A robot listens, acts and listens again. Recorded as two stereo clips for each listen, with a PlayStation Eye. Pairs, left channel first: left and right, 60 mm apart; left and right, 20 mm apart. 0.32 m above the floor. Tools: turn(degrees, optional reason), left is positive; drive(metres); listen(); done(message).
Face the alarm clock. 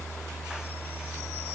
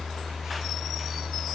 listen()
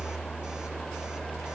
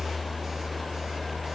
listen()
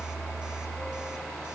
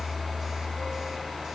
done("I can't make out an alarm clock to turn to.")